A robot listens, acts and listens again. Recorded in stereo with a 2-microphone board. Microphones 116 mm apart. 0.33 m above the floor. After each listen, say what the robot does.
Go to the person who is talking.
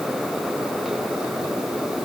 Keep listening.
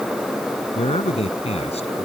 Turn 65° left.
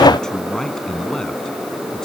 Keep listening.
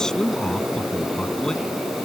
Drive 1.0 m forward.
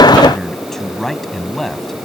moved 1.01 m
Drive 1.0 m forward.
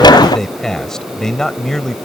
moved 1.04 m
Drive 1.0 m forward.
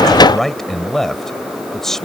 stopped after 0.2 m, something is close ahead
Arrived at the man speaking, straight ahead.